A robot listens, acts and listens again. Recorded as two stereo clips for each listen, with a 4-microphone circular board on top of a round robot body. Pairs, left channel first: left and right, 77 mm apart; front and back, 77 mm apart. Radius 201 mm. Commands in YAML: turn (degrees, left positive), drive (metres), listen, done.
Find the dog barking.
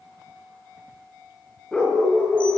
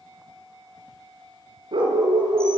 turn: 165
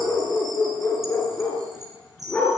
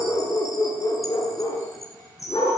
turn: 20
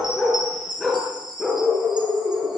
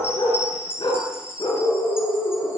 done: "Facing the dog barking."